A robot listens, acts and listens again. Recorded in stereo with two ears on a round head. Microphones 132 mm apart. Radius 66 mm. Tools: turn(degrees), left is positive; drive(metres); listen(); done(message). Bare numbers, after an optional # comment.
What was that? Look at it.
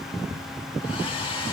# The hair dryer: about 35° left or 145° left.
turn(35)
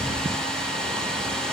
done("Facing the hair dryer.")